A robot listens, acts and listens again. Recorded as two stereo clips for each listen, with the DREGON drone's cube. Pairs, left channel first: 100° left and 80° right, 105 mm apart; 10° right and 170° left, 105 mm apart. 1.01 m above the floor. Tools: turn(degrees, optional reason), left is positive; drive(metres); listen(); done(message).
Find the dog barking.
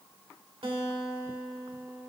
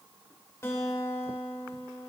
listen()
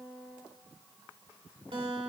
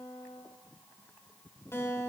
listen()
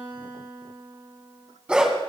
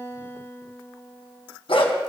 done("Facing the dog barking.")